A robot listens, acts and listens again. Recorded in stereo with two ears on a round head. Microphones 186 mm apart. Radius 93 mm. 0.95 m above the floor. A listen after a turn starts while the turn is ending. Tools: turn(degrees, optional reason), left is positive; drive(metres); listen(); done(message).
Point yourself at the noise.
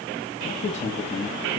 turn(degrees=30, reason="The man speaking: about 30° left or 150° left.")
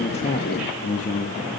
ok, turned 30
turn(degrees=35, reason="The man speaking: about 35° left or 145° left.")
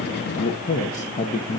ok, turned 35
turn(degrees=30, reason="The man speaking: about 30° left or 150° left.")
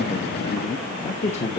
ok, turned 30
turn(degrees=30, reason="The man speaking: about 30° left or 150° left.")
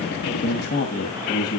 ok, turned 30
turn(degrees=130, reason="So it is at 130° left.")
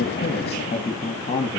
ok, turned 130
turn(degrees=30, reason="The man speaking is now 30° left.")
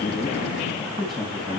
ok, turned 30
done("Found it: a man speaking, straight ahead.")